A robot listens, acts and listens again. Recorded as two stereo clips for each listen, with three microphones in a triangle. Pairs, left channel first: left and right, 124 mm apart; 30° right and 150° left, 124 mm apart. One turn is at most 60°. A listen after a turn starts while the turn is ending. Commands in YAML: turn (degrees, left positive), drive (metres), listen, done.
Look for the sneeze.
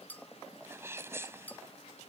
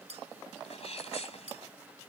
turn: -25
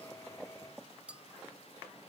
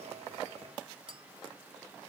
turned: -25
done: "I heard a sneeze from this way, but can't make it out now."